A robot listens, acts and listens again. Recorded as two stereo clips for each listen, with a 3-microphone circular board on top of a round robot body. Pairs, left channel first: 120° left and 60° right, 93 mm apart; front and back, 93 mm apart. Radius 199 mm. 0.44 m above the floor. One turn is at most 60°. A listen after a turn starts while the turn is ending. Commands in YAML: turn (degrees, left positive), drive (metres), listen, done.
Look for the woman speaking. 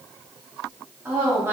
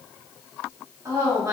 turn: -60
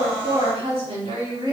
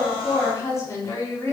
turn: -55
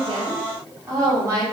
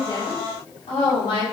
done: "Found it: a woman speaking, straight ahead, over 4 m away."